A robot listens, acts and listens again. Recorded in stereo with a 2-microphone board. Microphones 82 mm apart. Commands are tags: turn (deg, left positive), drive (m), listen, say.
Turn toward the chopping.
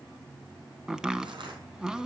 <turn deg="-30"/>
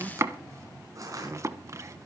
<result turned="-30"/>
<turn deg="-140"/>
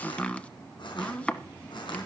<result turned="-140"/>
<turn deg="15"/>
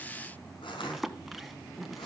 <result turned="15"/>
<say>Found it: chopping, straight ahead.</say>